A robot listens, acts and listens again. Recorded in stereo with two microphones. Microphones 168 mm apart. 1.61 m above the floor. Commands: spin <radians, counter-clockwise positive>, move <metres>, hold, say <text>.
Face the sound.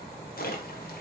spin 1.05
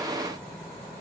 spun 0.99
hold
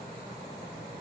say I heard a splash, but can't make it out now. It was about 5° left or 60° left.